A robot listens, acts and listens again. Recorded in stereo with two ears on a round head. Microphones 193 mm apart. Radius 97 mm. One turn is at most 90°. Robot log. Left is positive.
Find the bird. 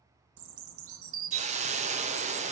note: The bird: about 65° right or 115° right.
cmd yaw -65
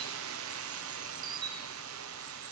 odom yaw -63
note: So it is at 20° right.
cmd yaw -20
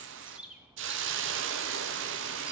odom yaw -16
end: Found it: a bird, straight ahead, under 1 m away.